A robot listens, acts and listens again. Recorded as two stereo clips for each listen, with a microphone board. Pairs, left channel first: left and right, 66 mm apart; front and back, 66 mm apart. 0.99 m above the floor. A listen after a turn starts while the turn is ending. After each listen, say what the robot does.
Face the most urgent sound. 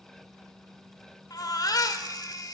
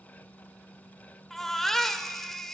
Turn 85° left.
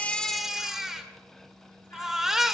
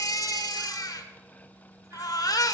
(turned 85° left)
Facing the baby crying, 1 to 2 m away.